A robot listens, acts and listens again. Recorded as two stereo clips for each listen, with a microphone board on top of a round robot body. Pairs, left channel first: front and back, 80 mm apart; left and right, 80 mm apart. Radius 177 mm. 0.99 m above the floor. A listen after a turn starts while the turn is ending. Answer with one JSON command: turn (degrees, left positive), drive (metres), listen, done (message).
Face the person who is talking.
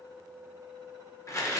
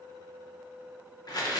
{"listen": true}
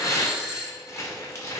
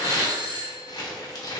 {"listen": true}
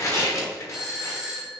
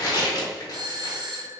{"done": "I can't make out anyone speaking, only a doorbell and tearing paper."}